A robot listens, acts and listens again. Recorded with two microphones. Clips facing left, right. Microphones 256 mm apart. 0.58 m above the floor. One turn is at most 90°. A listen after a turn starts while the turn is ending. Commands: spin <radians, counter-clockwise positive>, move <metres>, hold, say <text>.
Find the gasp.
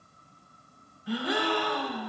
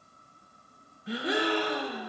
spin -0.35
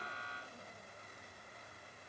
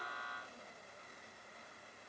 hold
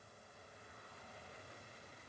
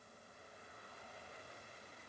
say I heard a gasp, but can't make it out now. It was about straight ahead or 140° right.